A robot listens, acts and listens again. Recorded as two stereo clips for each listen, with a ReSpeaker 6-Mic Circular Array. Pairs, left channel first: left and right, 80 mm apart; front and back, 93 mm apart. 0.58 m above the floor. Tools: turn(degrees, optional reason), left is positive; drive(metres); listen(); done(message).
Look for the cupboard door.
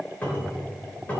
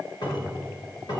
turn(degrees=20, reason="The cupboard door: 20° left.")
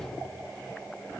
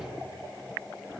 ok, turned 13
turn(degrees=10, reason="Nothing new. It was at 10° left.")
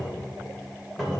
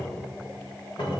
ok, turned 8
done("Found it: a cupboard door, straight ahead.")